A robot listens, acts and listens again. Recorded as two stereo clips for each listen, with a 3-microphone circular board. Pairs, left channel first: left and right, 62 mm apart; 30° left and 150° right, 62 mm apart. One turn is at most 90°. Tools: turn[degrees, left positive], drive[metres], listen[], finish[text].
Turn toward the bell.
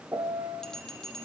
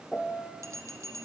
Thought: The bell: 170° left.
Action: turn[90]
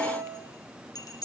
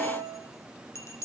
Thought: The bell is now 75° left.
Action: turn[75]
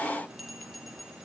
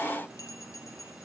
Action: finish[Facing the bell.]